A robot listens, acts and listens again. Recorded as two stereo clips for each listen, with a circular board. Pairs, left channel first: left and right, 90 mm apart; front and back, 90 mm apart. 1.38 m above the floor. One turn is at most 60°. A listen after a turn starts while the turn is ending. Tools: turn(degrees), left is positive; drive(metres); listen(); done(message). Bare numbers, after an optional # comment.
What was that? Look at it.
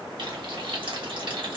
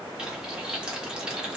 # The frying: 100° right.
turn(-60)
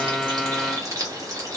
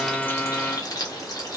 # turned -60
# The frying is now 40° right.
turn(-40)
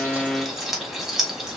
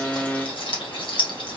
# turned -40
done("Facing the frying, 1 to 2 m away.")